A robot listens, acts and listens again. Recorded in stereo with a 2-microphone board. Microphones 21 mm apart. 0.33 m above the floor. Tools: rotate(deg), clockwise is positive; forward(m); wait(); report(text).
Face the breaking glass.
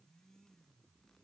wait()
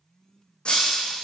rotate(-60)
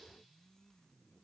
wait()
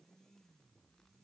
report("I heard breaking glass, but can't make it out now. It was about straight ahead or 60° left.")